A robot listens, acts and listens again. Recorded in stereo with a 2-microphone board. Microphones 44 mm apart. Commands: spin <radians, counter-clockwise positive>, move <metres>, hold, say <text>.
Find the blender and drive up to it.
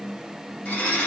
spin 0.44
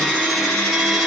move 1.0
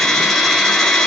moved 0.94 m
move 1.0
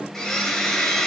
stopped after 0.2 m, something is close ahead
spin 0.17
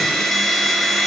say Arrived at the blender, straight ahead.